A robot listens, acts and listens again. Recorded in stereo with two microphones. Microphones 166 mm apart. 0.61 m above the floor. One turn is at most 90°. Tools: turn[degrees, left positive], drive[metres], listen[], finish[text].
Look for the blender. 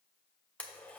Action: turn[30]
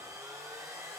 Thought: So it is at 20° right.
Action: turn[-20]
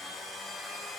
Action: finish[Found it: a blender, straight ahead.]